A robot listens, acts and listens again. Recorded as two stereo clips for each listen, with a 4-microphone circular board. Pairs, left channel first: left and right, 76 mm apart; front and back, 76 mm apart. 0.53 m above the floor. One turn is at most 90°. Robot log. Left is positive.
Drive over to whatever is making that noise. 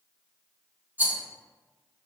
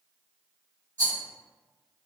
note: The rattle: 150° right.
cmd yaw -90
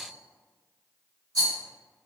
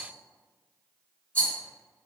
note: The rattle is now 70° right.
cmd yaw -70
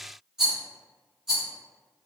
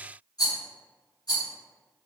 cmd fwd 1.0
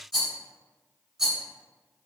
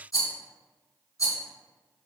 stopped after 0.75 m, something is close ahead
end: Arrived at the rattle, straight ahead.